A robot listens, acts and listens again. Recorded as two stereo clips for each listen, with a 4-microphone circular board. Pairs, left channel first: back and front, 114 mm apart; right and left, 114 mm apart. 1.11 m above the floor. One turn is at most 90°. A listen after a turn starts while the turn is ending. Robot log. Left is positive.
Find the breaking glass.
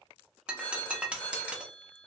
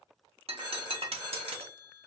note: The breaking glass: 80° left.
cmd yaw +80
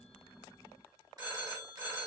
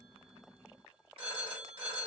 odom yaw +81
end: I heard breaking glass from this way, but can't make it out now.